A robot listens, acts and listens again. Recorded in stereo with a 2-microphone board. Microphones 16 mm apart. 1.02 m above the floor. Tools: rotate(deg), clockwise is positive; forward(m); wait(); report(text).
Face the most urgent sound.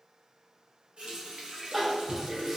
rotate(30)
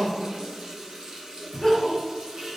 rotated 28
rotate(-25)
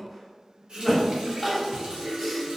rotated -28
report("Facing the crying.")